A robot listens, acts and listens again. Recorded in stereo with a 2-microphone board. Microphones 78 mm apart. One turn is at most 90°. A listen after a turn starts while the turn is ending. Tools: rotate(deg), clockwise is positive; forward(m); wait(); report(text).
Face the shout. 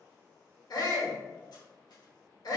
rotate(-60)
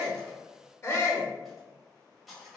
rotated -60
rotate(-40)
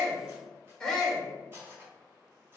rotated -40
rotate(-10)
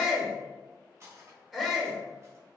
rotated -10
report("Found it: a shout, straight ahead, 1 to 2 m away.")